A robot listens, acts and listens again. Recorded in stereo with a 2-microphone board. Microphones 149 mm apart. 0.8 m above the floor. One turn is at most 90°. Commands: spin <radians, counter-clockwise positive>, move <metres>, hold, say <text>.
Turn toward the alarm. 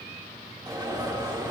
spin -0.44
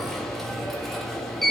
say Found it: an alarm, straight ahead.